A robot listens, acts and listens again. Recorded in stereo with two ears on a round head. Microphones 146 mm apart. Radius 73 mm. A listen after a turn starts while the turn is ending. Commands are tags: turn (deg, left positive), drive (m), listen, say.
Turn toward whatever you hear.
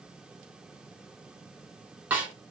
<turn deg="-30"/>
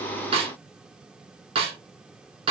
<turn deg="-140"/>
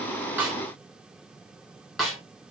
<say>Facing the snare drum, under 1 m away.</say>